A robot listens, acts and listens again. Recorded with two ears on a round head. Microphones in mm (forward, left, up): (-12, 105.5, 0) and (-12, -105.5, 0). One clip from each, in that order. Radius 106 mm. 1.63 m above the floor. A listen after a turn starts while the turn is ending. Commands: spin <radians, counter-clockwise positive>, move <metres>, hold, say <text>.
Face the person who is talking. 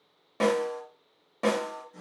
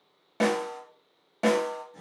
hold
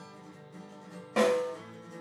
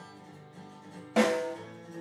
hold
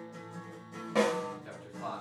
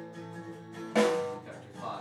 spin 0.52
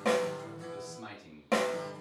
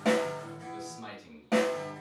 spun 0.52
say Found it: a man speaking, straight ahead.